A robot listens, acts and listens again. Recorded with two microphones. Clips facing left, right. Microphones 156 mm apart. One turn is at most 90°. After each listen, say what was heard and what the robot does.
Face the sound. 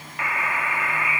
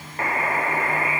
The buzzer: about 40° right or 140° right. Turn 40° right.
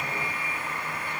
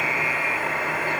So it is at 95° right. Turn 90° right.
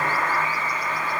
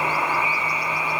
The buzzer is now 10° right. Turn 10° right.
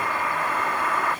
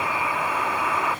Facing the buzzer.